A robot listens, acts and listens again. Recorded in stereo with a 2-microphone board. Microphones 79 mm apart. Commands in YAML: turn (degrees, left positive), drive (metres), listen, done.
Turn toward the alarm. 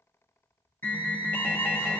turn: 25
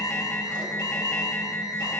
turn: 125
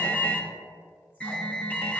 turn: 20
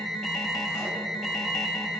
done: "Facing the alarm."